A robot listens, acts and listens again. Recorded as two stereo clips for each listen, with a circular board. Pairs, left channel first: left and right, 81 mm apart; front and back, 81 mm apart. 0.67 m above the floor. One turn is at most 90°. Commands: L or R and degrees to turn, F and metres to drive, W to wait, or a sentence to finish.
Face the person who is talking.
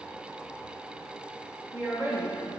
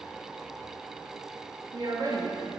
R90
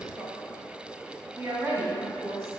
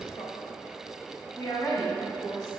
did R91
R35
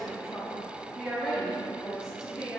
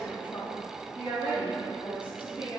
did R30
Facing the woman speaking, over 4 m away.